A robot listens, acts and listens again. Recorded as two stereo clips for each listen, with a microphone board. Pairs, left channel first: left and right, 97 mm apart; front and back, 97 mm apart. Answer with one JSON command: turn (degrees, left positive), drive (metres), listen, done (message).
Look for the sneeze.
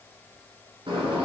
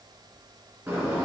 {"listen": true}
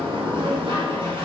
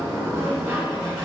{"listen": true}
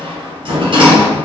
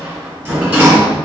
{"done": "I can't make out a sneeze to turn to."}